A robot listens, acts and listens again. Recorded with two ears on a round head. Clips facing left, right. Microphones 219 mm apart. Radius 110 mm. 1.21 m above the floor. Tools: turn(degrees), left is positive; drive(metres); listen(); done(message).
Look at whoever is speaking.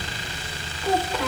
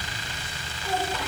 turn(degrees=65)
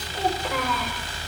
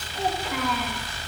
turn(degrees=50)
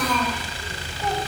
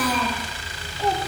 done("Found it: a child speaking, straight ahead, over 4 m away.")